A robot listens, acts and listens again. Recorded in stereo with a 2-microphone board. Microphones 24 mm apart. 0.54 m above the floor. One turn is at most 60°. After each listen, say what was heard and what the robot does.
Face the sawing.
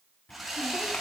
Turn 30° right.
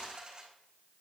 So it is at 145° right. Turn 60° right.
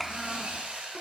The sawing is now 110° right. Turn 60° right.
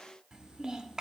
Nothing new. It was at 50° right. Turn 50° right.
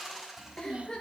The sawing is now 15° right. Turn 15° right.
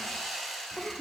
Found it: sawing, straight ahead.